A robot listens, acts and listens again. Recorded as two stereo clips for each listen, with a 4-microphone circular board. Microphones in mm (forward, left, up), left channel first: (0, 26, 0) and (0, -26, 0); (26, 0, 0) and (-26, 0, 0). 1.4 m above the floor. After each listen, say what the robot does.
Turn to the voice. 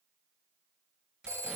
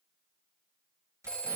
Keep listening.
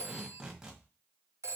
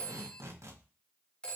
Keep listening.
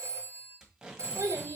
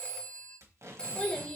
Turn 80° right.
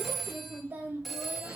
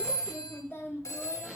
Turn 35° right.
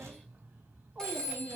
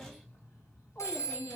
Turn 30° right.
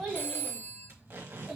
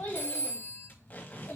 Found it: a child speaking, straight ahead.